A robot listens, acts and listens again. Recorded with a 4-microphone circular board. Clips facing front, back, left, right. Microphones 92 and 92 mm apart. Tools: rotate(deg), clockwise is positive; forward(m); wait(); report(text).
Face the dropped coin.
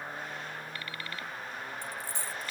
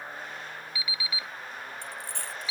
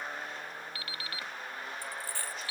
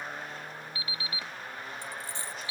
rotate(160)
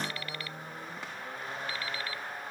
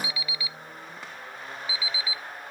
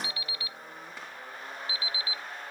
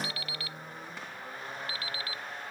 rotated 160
report("Facing where the dropped coin came from. I can't hear it now.")